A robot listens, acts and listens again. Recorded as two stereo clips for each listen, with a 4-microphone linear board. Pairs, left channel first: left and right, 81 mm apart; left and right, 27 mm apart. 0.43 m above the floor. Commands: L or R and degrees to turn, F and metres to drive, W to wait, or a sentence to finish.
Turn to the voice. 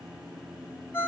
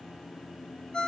W
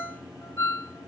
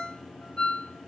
W
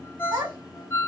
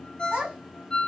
R75
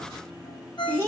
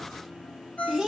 R25
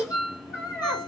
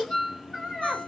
R10
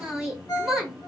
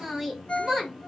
Facing the child speaking.